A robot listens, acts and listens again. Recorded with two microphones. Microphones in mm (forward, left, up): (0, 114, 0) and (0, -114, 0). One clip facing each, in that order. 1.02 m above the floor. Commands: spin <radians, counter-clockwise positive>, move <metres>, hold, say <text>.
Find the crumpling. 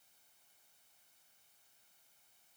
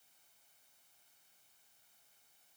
hold
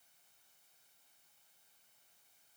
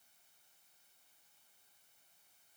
hold
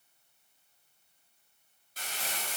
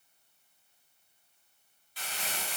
spin 0.70
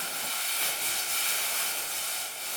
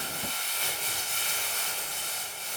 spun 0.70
spin 1.75
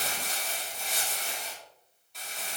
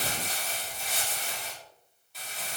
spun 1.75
say Found it: crumpling, straight ahead.